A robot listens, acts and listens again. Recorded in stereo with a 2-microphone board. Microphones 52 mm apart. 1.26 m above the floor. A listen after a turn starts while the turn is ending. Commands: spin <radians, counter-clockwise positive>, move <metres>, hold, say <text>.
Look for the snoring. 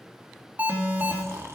spin -1.13
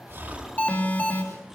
hold
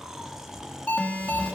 spin -0.17
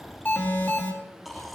say Found it: snoring, straight ahead.